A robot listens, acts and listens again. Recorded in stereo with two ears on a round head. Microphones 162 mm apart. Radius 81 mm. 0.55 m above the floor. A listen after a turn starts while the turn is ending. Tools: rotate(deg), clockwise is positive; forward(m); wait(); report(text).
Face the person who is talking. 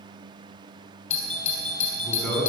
rotate(-30)
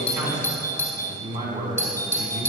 rotate(25)
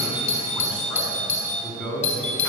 report("Facing the man speaking.")